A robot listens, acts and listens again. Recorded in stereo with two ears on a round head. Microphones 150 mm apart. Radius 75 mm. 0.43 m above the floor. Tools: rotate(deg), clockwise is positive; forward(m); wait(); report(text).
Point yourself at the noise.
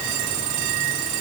wait()
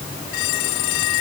wait()
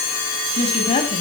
rotate(-35)
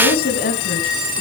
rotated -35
rotate(-120)
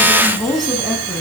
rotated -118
report("Found it: a woman speaking, straight ahead.")